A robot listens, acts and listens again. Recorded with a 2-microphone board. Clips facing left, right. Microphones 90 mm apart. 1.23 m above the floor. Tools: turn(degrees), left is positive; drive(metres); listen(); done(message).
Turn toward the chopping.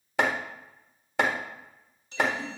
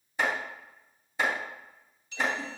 turn(degrees=90)
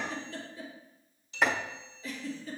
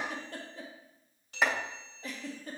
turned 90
done("Found it: chopping, straight ahead.")